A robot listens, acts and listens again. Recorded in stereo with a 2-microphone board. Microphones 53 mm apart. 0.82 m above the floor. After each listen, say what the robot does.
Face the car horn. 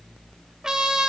Keep listening.
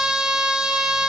Keep listening.
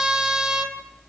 I can't make out a car horn to turn to.